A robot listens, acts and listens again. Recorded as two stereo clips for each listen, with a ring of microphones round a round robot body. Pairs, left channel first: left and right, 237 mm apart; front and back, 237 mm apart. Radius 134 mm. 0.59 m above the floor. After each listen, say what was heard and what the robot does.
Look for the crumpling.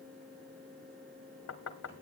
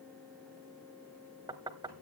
Keep listening.
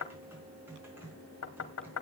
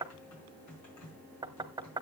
Keep listening.
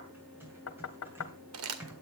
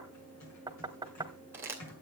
The crumpling: 100° right. Turn 100° right.
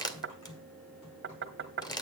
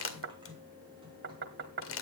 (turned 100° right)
The crumpling is now 20° left. Turn 20° left.
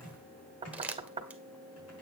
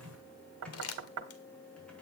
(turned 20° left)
Facing the crumpling.